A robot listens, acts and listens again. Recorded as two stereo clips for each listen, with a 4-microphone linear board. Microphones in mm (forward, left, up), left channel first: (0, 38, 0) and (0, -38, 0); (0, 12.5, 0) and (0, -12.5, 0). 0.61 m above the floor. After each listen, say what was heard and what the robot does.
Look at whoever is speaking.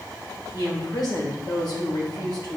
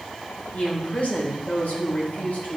The woman speaking: about 65° left or 115° left. Turn 65° left.
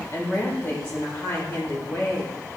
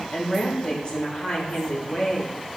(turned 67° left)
So it is at 40° left. Turn 40° left.
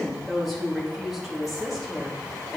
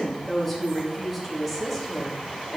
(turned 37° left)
Found it: a woman speaking, straight ahead.